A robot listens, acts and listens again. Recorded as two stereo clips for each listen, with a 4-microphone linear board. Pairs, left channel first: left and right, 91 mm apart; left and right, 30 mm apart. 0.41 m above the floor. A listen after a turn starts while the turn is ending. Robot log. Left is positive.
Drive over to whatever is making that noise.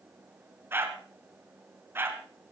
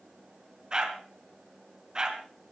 note: The dog barking: about 25° right or 155° right.
cmd yaw -25
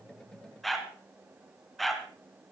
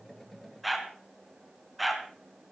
cmd fwd 1.0
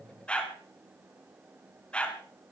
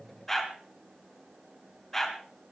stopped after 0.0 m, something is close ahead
note: The dog barking is now 15° left.
cmd yaw +15
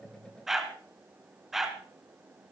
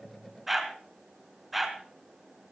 end: Something is in my way. I am facing the dog barking but have not reached it.